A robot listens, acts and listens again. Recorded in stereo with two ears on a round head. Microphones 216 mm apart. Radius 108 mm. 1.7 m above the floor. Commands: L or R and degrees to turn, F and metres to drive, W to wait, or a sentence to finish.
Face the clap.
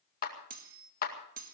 L40
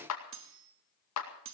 L100
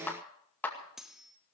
L10
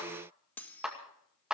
Facing the clap.